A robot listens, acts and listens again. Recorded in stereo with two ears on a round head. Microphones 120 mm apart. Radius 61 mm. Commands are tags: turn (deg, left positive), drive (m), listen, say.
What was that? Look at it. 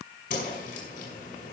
<turn deg="60"/>
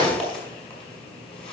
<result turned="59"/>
<say>Facing the whoosh.</say>